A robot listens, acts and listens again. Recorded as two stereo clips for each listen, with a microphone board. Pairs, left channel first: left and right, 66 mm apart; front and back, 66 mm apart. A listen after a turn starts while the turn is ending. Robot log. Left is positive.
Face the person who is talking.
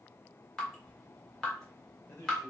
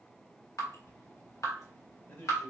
note: The man speaking: 55° left.
cmd yaw +55
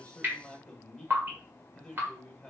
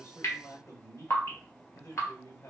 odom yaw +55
note: The man speaking is now 10° left.
cmd yaw +10
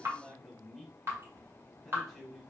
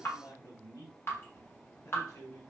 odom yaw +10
end: Found it: a man speaking, straight ahead, 1 to 2 m away.